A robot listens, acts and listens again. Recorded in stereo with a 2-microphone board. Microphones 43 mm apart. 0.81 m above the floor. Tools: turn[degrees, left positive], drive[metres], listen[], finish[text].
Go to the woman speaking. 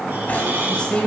Thought: The woman speaking: about 25° left or 155° left.
Action: turn[25]
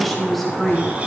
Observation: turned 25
Action: drive[1.0]
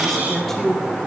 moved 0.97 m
Action: drive[1.0]
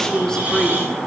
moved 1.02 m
Thought: The woman speaking is now 15° left.
Action: turn[15]
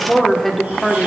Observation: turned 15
Action: drive[1.0]
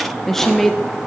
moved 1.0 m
Thought: The woman speaking is now 10° left.
Action: turn[10]
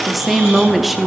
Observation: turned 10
Action: drive[1.0]
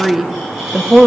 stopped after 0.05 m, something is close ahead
Action: finish[I am next to the woman speaking.]